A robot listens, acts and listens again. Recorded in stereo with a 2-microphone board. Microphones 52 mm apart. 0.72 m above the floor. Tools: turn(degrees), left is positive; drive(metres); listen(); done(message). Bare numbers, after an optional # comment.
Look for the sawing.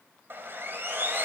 # The sawing: about 45° right or 135° right.
turn(-45)
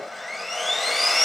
done("Facing the sawing, 2 to 4 m away.")